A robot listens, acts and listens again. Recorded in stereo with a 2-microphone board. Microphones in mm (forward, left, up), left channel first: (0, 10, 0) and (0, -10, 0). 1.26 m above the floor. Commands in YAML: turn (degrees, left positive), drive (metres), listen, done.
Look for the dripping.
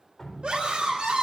turn: 25
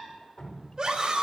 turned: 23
turn: 135
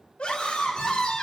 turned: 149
turn: -15
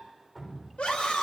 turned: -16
done: "Found it: dripping, straight ahead, over 4 m away."